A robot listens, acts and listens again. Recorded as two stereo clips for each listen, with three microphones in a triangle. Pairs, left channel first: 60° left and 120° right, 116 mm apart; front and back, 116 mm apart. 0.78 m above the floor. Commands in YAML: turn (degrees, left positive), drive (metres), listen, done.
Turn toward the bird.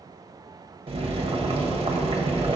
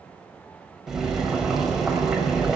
listen: true
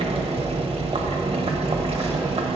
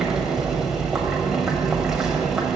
listen: true
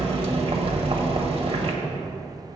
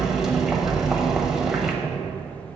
done: "I can't make out a bird to turn to."